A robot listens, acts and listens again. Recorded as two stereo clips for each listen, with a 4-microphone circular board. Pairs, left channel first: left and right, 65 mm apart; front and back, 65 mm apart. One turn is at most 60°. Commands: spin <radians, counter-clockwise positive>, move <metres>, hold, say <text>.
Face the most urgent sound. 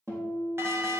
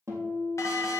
spin -0.70
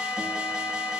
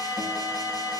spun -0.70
spin -0.26
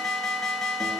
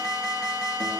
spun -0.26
say Facing the alarm, 1 to 2 m away.